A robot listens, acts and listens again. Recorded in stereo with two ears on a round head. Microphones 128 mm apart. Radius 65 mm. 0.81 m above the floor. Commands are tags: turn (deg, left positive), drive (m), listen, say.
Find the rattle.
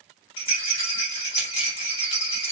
<turn deg="40"/>
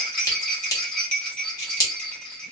<turn deg="10"/>
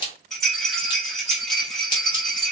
<say>Facing the rattle.</say>